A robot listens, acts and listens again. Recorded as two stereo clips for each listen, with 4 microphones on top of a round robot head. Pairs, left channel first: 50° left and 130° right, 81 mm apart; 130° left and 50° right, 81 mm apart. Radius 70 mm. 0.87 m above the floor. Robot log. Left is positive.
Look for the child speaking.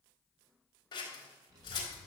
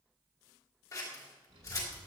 note: The child speaking: 80° right.
cmd yaw -80
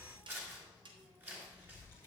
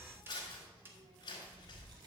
note: The child speaking is now 10° right.
cmd yaw -10
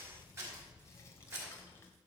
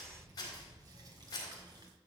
note: The child speaking is now 10° right.
cmd yaw -10
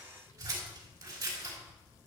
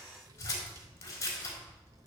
end: Found it: a child speaking, straight ahead, 2 to 4 m away.